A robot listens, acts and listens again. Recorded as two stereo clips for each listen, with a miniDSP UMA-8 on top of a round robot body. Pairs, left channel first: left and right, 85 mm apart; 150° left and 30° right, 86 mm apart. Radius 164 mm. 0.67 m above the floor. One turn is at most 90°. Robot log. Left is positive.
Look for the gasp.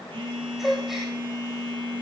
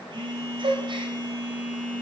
end: Facing the gasp.